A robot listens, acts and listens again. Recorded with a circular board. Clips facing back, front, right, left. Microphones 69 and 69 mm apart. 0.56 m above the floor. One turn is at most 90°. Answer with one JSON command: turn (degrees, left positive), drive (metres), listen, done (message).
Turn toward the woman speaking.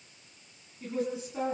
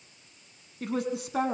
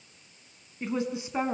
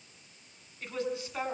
{"turn": -20}
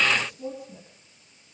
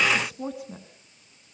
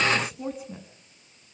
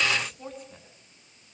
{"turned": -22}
{"done": "Found it: a woman speaking, straight ahead, over 4 m away."}